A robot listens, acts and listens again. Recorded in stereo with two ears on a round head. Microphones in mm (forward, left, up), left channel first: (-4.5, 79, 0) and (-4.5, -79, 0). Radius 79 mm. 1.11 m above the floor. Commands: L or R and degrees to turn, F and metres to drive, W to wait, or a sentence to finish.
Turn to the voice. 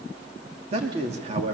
R40
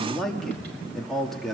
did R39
Found it: a man speaking, straight ahead, 2 to 4 m away.